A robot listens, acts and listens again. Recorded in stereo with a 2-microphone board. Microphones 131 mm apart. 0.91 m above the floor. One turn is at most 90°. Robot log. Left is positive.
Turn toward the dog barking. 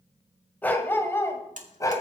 note: The dog barking: about 25° left or 155° left.
cmd yaw +25
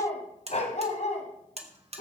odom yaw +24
note: So it is at 115° left.
cmd yaw +90
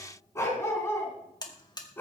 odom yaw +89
note: The dog barking is now 15° left.
cmd yaw +15
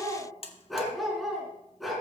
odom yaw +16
end: Facing the dog barking, over 4 m away.